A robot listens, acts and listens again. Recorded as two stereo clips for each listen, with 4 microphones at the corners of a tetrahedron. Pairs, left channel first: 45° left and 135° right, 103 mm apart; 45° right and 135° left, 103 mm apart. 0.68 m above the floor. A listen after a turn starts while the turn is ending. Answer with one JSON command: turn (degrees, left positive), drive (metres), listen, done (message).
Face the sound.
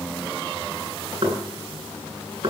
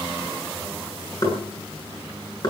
{"turn": -95}
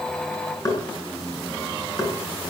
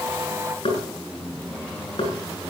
{"turn": -15}
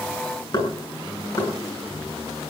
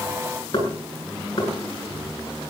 {"done": "Facing the knocking, over 4 m away."}